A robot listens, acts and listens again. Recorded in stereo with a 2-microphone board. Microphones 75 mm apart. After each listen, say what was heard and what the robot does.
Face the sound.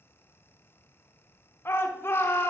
The shout: about 35° left or 145° left. Turn 35° left.
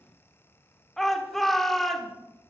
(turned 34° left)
Facing the shout, 1 to 2 m away.